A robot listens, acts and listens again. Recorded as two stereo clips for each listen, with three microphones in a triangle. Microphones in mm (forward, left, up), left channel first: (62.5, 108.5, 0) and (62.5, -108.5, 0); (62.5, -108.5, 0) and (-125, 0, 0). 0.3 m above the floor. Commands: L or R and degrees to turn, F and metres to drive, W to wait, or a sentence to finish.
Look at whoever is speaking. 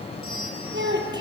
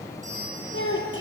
R55
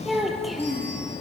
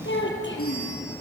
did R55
Found it: a child speaking, straight ahead.